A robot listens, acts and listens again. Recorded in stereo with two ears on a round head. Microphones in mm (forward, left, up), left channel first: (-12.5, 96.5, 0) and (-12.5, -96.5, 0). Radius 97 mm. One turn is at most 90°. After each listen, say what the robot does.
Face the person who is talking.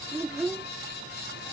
Turn 30° right.
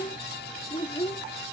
Turn 20° left.
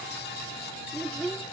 Found it: a child speaking, straight ahead.